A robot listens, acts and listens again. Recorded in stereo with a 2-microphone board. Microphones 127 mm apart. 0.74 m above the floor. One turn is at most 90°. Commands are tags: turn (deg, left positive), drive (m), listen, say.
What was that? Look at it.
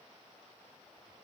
<listen/>
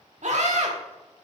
<turn deg="-65"/>
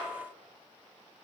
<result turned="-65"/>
<listen/>
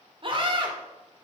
<turn deg="-45"/>
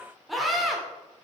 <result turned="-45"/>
<say>Facing the scream.</say>